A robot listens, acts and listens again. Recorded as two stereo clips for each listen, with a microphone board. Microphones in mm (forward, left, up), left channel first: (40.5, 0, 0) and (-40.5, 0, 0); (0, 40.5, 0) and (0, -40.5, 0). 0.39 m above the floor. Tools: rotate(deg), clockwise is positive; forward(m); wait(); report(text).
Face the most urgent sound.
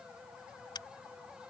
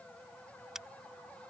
wait()
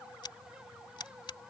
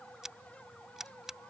wait()
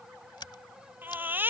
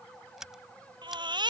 rotate(115)
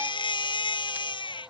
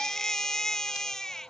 report("Found it: a baby crying, straight ahead.")